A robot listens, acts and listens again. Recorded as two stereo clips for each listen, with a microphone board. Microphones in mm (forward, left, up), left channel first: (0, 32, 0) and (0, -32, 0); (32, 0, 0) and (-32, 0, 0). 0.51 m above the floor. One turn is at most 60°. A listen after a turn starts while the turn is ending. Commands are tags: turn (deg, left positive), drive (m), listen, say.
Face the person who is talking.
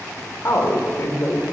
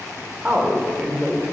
<turn deg="60"/>
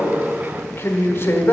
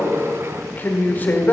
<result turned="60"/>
<turn deg="50"/>
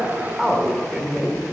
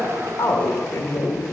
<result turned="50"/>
<say>Found it: a man speaking, straight ahead.</say>